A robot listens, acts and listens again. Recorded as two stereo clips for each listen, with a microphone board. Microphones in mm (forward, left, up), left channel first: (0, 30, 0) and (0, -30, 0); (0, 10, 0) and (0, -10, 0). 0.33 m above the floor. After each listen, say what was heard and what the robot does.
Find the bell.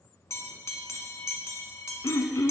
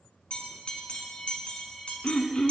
The bell: about 60° left or 120° left. Turn 60° left.
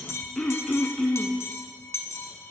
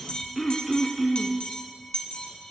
So it is at 55° left. Turn 55° left.
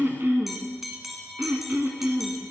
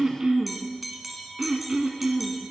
Facing the bell, 1 to 2 m away.